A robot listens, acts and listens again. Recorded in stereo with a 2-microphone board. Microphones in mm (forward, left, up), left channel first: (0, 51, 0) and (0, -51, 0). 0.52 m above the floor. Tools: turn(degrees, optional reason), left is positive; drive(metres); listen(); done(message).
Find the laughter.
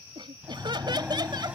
turn(degrees=-45, reason="The laughter: about 45° right or 135° right.")
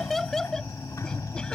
done("Facing the laughter.")